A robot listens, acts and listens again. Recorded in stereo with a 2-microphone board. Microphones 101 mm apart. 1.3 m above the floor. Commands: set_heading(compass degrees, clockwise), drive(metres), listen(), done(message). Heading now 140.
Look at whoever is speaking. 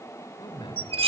set_heading(85)
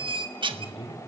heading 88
set_heading(18)
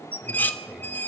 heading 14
listen()
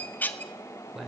done("Facing the man speaking.")